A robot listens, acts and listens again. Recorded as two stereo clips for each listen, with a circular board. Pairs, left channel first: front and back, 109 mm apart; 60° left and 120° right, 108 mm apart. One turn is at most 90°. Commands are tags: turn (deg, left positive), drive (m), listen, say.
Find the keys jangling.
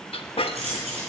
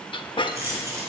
<turn deg="90"/>
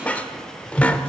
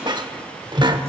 <turn deg="85"/>
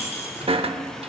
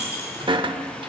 <say>Found it: keys jangling, straight ahead, over 4 m away.</say>